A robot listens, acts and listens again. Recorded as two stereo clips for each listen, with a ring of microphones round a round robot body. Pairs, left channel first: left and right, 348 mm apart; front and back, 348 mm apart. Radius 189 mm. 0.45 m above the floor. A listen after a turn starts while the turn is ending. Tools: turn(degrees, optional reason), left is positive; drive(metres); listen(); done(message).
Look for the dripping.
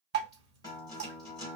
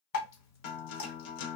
turn(degrees=-35, reason="The dripping: 35° right.")
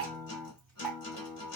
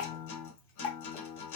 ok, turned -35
done("Found it: dripping, straight ahead.")